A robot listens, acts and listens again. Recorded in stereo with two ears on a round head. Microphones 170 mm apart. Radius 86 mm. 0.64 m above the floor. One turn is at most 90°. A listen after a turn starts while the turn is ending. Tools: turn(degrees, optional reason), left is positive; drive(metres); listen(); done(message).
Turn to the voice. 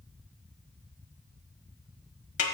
listen()
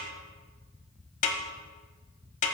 listen()
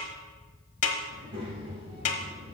turn(degrees=-30, reason="The child speaking: about 30° right or 150° right.")
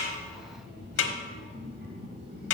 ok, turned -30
turn(degrees=-90, reason="So it is at 120° right.")
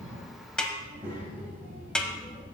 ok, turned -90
turn(degrees=-10, reason="The child speaking is now 10° right.")
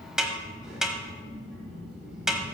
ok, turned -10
done("Facing the child speaking.")